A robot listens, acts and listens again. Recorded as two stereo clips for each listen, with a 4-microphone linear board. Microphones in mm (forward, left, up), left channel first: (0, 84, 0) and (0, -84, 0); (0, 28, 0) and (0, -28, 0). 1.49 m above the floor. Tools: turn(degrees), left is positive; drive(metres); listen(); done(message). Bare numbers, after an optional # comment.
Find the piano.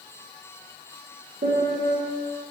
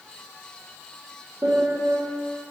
turn(-90)
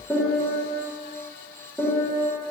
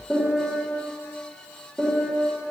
done("Facing the piano.")